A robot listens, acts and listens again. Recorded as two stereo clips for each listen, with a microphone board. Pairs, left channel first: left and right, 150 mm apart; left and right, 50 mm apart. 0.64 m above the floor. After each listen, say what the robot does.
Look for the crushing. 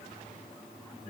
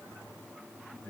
Keep listening.
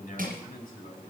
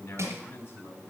Turn 70° right.
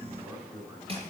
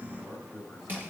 Turn 40° right.
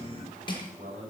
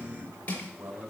Turn 30° left.
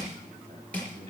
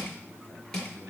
Turn 10° left.
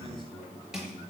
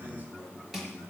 Found it: crushing, straight ahead, over 4 m away.